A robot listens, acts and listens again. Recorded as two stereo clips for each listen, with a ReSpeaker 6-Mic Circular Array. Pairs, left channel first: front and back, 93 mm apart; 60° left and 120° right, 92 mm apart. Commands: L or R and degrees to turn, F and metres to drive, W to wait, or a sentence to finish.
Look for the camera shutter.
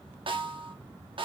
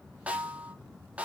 W
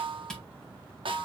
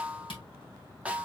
L85
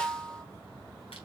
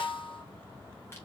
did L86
W
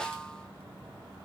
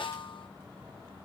W
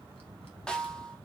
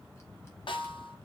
I heard a camera shutter from this way, but can't make it out now.